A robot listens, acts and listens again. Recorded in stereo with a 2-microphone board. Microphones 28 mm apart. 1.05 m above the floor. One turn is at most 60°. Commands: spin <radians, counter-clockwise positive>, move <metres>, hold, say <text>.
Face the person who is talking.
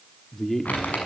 spin 0.52
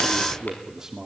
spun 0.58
spin -0.35
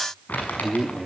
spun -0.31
say Facing the man speaking.